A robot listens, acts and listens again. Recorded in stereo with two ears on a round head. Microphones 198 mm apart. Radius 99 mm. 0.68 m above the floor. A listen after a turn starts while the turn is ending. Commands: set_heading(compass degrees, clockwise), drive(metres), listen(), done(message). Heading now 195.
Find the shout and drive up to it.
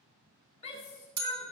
set_heading(165)
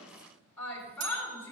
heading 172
set_heading(162)
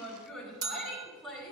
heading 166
drive(1.0)
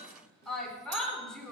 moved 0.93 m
drive(1.0)
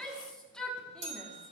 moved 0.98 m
drive(1.0)
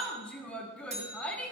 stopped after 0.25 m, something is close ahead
set_heading(156)
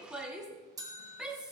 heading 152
done("I am next to the shout.")